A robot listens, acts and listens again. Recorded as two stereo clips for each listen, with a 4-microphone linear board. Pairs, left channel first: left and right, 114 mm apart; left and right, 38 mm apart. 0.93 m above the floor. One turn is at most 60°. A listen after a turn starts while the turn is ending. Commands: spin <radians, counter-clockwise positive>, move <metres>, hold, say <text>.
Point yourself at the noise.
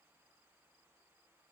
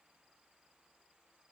hold
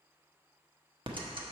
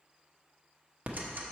spin -0.87
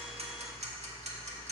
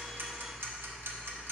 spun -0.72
spin -1.05
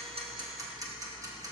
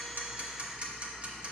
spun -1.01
spin -0.61
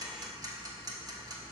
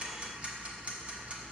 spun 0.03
spin -0.61
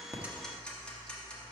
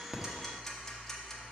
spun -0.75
spin 0.17
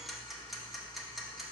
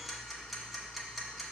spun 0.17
say Found it: ticking, straight ahead, 1 to 2 m away.